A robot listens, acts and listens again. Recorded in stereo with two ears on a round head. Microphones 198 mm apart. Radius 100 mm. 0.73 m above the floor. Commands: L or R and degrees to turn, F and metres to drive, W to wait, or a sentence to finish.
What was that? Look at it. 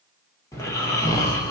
L30
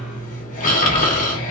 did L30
L135
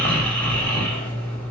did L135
Facing the snoring, under 1 m away.